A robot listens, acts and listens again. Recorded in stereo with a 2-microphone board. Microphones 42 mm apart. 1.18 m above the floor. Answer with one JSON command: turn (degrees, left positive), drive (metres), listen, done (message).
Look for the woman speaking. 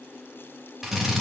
{"listen": true}
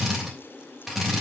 {"listen": true}
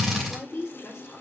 {"turn": 70}
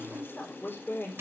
{"turn": 50}
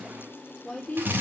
{"turn": 10}
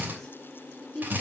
{"turn": 10}
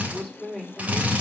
{"done": "Found it: a woman speaking, straight ahead, 2 to 4 m away."}